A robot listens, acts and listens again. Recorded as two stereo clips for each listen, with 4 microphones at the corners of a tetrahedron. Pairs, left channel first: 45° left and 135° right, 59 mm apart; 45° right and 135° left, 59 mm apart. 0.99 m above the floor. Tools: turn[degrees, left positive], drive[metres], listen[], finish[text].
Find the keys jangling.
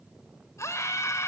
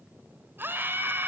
Action: listen[]
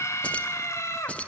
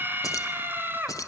Thought: The keys jangling: 20° right.
Action: turn[-20]
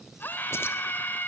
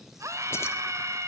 Action: listen[]
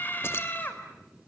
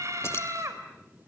Action: listen[]
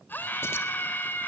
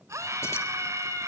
Action: finish[Facing where the keys jangling came from. I can't hear it now.]